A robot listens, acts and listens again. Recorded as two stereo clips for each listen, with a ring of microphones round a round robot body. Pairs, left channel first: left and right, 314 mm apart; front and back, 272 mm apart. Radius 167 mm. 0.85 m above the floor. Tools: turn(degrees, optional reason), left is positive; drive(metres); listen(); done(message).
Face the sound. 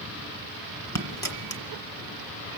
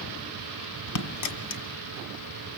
turn(degrees=10, reason="The dropped coin: 10° left.")
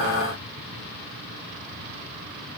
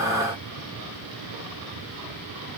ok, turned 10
done("I heard a dropped coin from this way, but can't make it out now.")